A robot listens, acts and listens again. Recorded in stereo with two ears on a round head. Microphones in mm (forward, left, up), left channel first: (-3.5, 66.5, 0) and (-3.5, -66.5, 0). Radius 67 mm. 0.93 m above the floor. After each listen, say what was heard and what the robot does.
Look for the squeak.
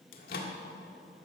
Keep listening.
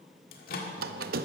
The squeak: about 65° right or 115° right. Turn 65° right.
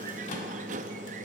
So it is at 50° right. Turn 50° right.
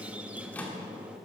The squeak is now 10° right. Turn 10° right.
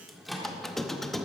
Facing the squeak, under 1 m away.